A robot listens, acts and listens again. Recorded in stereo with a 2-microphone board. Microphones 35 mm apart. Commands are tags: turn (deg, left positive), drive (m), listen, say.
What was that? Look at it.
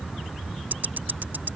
<turn deg="-65"/>
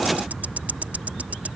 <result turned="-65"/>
<turn deg="-50"/>
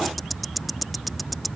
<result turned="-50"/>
<say>Found it: ticking, straight ahead.</say>